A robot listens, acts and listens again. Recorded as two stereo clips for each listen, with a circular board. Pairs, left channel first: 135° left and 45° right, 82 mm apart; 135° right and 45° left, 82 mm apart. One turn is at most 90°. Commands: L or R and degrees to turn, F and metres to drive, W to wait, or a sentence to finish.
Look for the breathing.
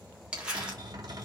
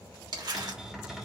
W
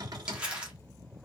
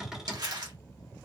W
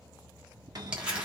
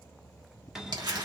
I can't make out breathing to turn to.